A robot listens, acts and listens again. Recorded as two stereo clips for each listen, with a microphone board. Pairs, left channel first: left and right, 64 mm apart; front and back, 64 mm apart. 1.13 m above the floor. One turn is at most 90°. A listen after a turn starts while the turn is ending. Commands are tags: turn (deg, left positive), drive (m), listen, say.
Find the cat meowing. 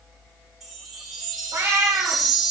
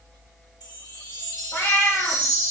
<turn deg="-45"/>
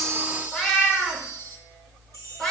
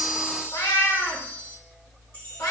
<turn deg="10"/>
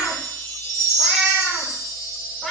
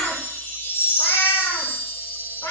<say>Facing the cat meowing, 1 to 2 m away.</say>